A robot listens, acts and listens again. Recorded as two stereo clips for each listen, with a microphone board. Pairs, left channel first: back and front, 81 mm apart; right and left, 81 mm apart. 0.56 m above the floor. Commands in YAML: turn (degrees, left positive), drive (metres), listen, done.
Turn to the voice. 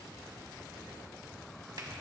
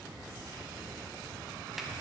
listen: true
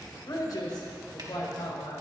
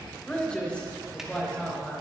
turn: -160
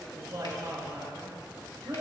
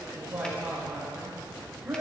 turn: 25
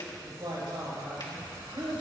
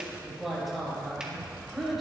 done: "Found it: a man speaking, straight ahead, over 4 m away."